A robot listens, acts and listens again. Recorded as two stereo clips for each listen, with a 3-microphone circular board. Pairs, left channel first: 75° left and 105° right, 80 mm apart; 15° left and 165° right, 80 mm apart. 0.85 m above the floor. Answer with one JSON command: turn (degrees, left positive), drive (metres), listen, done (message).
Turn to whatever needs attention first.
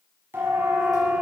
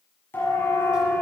{"turn": -40}
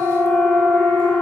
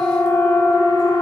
{"turn": 10}
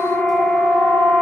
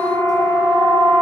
{"done": "Found it: a siren, straight ahead, over 4 m away."}